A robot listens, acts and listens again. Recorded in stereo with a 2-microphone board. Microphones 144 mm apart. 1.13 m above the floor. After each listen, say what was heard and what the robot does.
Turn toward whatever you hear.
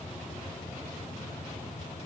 Keep listening.
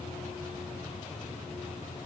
Keep listening.
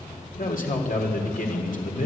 The man speaking: about 65° left or 115° left. Turn 65° left.
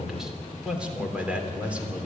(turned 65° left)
So it is at 10° right. Turn 10° right.
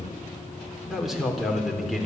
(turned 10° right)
Found it: a man speaking, straight ahead, 2 to 4 m away.